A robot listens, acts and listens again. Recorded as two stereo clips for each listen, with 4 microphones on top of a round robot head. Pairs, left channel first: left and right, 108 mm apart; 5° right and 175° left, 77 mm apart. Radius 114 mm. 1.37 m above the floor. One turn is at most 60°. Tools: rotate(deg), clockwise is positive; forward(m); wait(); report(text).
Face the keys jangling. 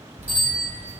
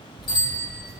rotate(60)
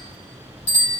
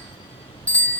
report("Facing the keys jangling.")